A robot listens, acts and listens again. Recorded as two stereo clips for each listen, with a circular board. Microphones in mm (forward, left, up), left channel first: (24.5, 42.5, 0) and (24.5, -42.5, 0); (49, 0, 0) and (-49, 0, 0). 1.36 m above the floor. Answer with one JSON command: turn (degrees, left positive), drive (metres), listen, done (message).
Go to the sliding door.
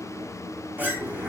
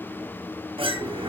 {"turn": -160}
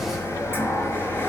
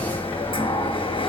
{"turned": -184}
{"turn": 25}
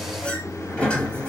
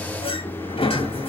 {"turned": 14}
{"turn": 15}
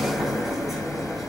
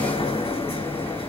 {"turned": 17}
{"drive": 1.0}
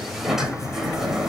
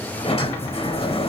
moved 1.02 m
{"drive": 1.0}
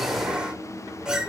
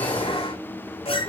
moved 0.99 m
{"turn": -10}
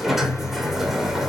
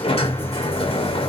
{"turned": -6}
{"drive": 1.0}
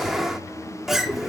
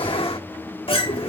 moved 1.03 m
{"drive": 1.0}
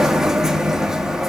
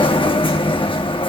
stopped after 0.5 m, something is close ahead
{"turn": -10}
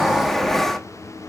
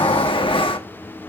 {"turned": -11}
{"done": "Arrived at the sliding door, straight ahead."}